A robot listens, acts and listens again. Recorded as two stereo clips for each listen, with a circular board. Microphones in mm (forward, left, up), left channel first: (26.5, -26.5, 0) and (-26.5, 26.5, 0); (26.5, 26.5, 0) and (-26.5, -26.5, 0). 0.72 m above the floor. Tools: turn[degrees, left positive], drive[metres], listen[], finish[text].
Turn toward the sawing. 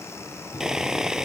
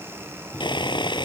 Thought: The sawing: 50° left.
Action: turn[50]
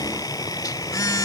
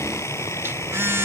Thought: The sawing is now 10° right.
Action: turn[-10]
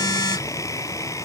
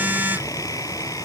Action: listen[]
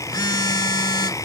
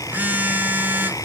Action: listen[]
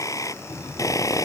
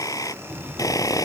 Action: finish[Facing the sawing.]